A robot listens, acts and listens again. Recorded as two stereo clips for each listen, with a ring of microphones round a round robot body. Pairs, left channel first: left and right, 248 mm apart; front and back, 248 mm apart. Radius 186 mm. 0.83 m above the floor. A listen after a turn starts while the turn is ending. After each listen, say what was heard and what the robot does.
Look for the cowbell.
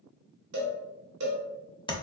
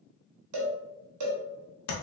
The cowbell: 145° right. Turn 145° right.
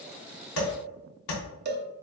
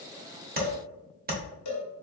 The cowbell is now 35° right. Turn 35° right.
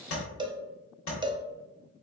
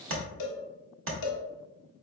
The cowbell is now 15° right. Turn 15° right.
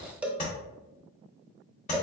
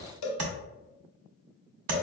Found it: a cowbell, straight ahead.